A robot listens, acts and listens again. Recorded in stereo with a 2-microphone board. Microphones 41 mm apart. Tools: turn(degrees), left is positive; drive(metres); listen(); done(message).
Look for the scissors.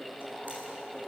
listen()
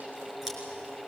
turn(degrees=-30)
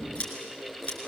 turn(degrees=25)
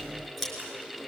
done("Found it: scissors, straight ahead, over 4 m away.")